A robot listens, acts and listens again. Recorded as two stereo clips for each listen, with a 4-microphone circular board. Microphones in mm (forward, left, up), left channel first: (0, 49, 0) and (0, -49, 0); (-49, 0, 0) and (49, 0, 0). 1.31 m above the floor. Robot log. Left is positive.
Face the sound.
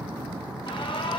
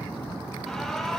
note: The alarm: 95° left.
cmd yaw +95
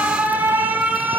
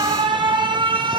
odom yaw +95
note: The alarm is now 20° right.
cmd yaw -20
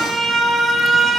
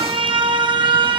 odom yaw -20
end: Found it: an alarm, straight ahead.